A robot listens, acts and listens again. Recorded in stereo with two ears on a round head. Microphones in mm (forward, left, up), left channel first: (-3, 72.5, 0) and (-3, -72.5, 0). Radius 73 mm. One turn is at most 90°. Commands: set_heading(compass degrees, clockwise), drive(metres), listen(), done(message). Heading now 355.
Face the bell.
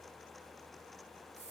listen()
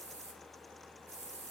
listen()
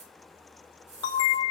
set_heading(325)
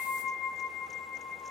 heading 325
done("Facing the bell, 2 to 4 m away.")